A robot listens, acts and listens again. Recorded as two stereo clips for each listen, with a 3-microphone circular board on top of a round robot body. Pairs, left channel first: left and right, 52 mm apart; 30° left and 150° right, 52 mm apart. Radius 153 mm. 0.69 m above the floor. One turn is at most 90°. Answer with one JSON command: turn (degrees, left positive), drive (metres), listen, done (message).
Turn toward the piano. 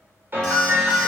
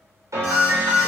{"turn": -90}
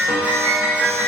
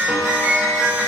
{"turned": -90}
{"turn": -85}
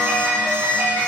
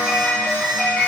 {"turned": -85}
{"turn": -35}
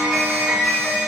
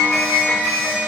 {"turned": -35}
{"turn": -15}
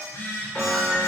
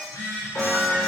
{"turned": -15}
{"done": "Found it: a piano, straight ahead, 2 to 4 m away."}